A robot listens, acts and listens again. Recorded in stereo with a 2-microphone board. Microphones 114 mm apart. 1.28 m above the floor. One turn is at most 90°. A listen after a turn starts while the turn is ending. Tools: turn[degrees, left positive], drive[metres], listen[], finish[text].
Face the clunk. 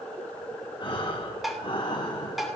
Action: listen[]
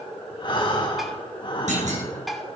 Action: turn[-90]
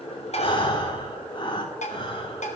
Action: finish[I heard a clunk from this way, but can't make it out now.]